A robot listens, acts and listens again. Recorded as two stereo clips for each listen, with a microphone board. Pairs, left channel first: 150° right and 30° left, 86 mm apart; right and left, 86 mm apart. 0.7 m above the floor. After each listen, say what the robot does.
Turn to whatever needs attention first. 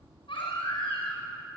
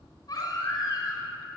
Turn 135° right.
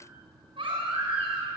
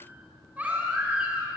Turn 20° left.
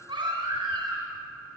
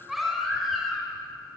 Facing the baby crying.